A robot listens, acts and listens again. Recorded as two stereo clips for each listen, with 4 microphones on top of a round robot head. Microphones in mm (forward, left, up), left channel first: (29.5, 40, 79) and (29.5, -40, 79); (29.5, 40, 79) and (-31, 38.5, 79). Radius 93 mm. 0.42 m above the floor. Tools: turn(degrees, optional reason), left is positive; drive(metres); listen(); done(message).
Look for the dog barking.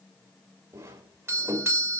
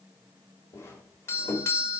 listen()
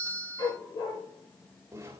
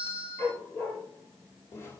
turn(degrees=60, reason="The dog barking: 60° left.")
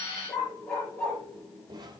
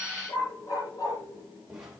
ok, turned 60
turn(degrees=10, reason="The dog barking is now 10° left.")
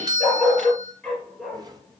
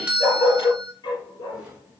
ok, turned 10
done("Facing the dog barking.")